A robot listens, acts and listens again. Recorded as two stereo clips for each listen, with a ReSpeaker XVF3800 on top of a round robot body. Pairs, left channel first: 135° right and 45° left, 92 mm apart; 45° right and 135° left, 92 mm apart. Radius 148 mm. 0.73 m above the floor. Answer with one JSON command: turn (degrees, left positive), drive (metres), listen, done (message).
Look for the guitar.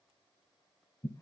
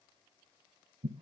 {"listen": true}
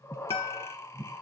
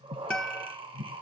{"turn": -130}
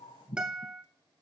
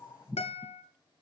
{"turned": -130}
{"turn": -35}
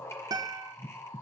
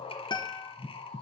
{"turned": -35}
{"done": "Found it: a guitar, straight ahead."}